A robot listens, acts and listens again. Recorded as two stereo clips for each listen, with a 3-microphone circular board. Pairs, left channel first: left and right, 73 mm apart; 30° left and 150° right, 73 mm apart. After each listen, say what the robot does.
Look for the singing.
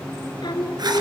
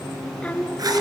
Turn 105° left.
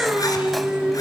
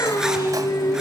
Turn 15° right.
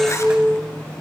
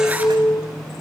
Found it: singing, straight ahead, 1 to 2 m away.